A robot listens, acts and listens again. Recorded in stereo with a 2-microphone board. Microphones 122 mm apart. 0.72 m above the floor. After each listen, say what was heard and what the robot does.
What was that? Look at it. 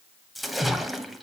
Turn 30° left.
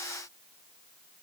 Keep listening.
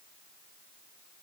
I heard a splash, but can't make it out now. It was about 30° right or 150° left.